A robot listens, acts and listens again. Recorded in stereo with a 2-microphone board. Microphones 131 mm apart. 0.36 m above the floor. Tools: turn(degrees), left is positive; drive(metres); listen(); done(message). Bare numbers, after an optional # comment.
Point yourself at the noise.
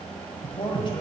# The man speaking: about 35° left or 145° left.
turn(35)
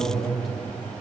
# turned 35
done("Found it: a man speaking, straight ahead.")